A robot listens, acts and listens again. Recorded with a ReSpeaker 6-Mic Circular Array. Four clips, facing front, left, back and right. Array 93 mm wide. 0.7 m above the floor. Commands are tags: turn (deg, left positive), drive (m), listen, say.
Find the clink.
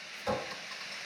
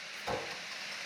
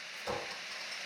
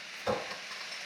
<turn deg="-75"/>
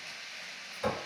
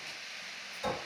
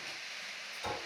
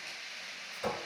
<turn deg="-25"/>
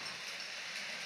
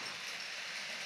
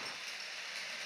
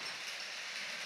<listen/>
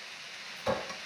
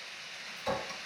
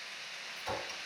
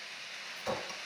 <say>Facing the clink, 1 to 2 m away.</say>